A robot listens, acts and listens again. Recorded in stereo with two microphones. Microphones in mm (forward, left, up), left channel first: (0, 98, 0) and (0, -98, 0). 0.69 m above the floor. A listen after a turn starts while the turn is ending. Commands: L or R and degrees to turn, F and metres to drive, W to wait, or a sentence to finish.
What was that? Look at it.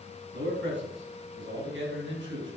R90
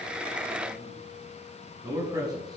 R20
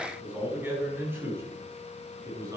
R15
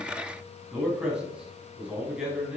Facing the man speaking.